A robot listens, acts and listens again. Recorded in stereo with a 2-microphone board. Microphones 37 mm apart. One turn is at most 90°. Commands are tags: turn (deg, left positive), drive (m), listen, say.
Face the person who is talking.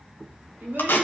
<turn deg="-65"/>
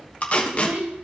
<turn deg="-60"/>
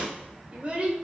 <turn deg="-40"/>
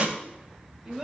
<turn deg="-10"/>
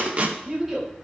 <turn deg="-10"/>
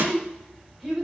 <say>Found it: a child speaking, straight ahead.</say>